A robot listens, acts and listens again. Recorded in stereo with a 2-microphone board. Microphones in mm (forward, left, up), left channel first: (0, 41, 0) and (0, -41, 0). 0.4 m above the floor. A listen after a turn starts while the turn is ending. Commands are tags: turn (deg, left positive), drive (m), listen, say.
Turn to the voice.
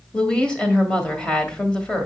<turn deg="30"/>
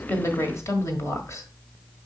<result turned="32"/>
<turn deg="135"/>
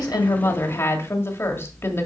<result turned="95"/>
<turn deg="40"/>
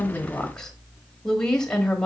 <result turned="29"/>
<turn deg="10"/>
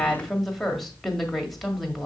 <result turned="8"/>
<say>Facing the woman speaking, 1 to 2 m away.</say>